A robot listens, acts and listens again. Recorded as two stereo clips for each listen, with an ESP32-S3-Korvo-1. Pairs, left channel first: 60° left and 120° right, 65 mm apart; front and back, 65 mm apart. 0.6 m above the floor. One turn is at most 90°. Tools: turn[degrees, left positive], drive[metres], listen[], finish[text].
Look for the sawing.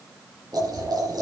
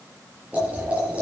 Action: listen[]
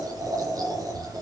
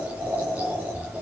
Action: listen[]
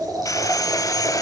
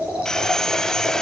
Thought: The sawing: 80° left.
Action: turn[80]
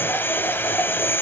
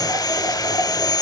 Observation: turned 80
Action: finish[Facing the sawing.]